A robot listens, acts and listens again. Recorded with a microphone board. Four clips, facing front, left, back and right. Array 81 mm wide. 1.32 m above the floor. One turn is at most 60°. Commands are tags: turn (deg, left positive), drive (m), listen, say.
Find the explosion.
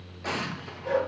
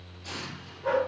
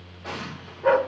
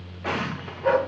<turn deg="-60"/>
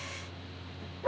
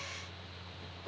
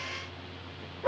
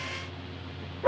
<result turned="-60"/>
<turn deg="-15"/>
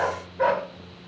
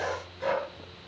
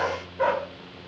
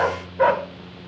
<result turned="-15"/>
<say>Facing where the explosion came from. I can't hear it now.</say>